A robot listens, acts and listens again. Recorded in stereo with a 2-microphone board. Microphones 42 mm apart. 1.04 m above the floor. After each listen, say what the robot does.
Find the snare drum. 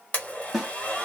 Turn 30° right.
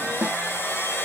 Turn 140° right.
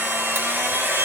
Keep listening.
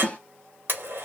Turn 30° left.
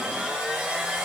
Keep listening.
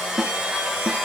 Found it: a snare drum, straight ahead.